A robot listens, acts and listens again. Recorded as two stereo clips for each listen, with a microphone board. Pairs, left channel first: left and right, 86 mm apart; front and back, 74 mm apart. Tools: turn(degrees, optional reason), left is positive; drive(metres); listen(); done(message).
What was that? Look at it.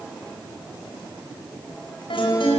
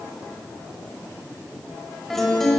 turn(degrees=85, reason="The guitar: 85° left.")
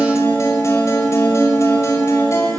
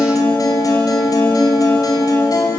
turn(degrees=35, reason="The guitar is now 35° left.")
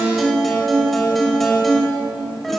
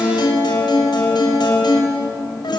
done("Found it: a guitar, straight ahead, over 4 m away.")